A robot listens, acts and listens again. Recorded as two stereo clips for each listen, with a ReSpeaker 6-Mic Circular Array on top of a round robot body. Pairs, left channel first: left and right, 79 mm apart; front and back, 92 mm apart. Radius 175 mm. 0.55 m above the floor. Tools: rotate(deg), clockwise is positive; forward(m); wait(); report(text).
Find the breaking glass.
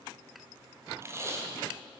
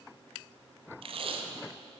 wait()
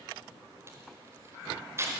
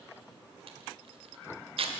wait()
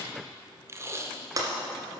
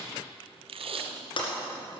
rotate(40)
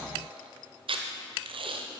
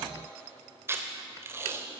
report("Facing where the breaking glass came from. I can't hear it now.")